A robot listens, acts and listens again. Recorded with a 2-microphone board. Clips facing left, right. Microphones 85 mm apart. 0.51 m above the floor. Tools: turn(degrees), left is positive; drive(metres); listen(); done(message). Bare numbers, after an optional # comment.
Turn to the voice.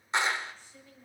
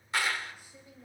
# The woman speaking: about 15° right or 165° right.
turn(-15)
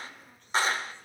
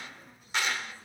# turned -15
listen()
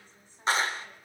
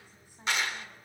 listen()
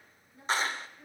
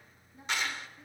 # The woman speaking: about 20° right or 160° right.
turn(-20)
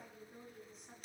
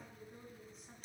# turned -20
turn(30)
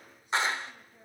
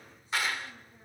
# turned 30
listen()
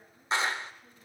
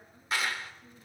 listen()
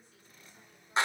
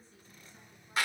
done("I heard a woman speaking, but can't make it out now. It was about 30° right or 150° left.")